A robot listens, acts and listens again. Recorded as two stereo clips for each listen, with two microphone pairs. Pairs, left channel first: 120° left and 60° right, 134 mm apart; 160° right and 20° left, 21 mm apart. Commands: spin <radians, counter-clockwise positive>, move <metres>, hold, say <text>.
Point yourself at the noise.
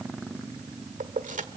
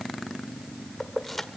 spin -1.31
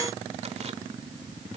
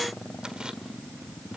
hold
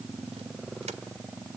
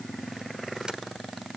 hold
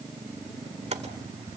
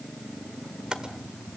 spin -0.44
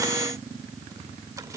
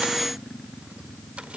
hold
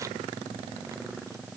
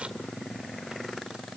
hold
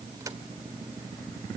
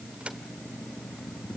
say I heard keys jangling from this way, but can't make it out now.